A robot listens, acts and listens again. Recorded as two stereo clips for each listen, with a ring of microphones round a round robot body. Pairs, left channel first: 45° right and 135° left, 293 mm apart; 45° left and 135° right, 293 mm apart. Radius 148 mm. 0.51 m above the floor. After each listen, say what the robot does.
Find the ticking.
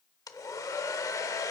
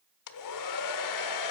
Keep listening.
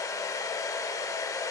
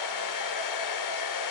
Keep listening.
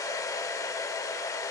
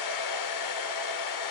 I can't make out ticking to turn to.